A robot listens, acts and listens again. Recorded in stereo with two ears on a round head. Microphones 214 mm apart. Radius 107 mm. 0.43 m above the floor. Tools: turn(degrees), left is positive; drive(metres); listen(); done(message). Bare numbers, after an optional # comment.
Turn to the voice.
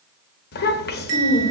# The child speaking: about 45° left or 135° left.
turn(45)
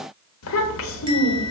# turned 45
# So it is at 80° left.
turn(80)
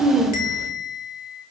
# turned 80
# The child speaking is now 15° right.
turn(-15)
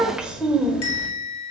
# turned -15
done("Found it: a child speaking, straight ahead.")